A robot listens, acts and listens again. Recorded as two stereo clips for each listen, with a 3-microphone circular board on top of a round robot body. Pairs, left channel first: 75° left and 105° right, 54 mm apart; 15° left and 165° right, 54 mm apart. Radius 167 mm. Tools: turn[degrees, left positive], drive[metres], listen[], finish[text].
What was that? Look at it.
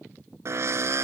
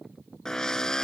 Thought: The drill: 65° right.
Action: turn[-65]
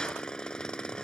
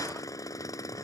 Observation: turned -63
Action: finish[Facing the drill.]